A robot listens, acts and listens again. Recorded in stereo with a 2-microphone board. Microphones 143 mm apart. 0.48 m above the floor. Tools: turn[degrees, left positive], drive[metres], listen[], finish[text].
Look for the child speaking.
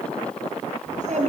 Thought: The child speaking: about 60° right or 120° right.
Action: turn[-60]
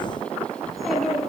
Action: finish[Found it: a child speaking, straight ahead, over 4 m away.]